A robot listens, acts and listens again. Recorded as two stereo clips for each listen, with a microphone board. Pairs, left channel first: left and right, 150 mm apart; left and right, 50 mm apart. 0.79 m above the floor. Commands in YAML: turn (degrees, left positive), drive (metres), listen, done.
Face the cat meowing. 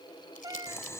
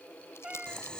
turn: -25
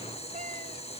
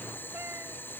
listen: true
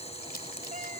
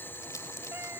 listen: true
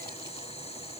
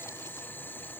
done: "I heard a cat meowing, but can't make it out now. It was about straight ahead or 130° right."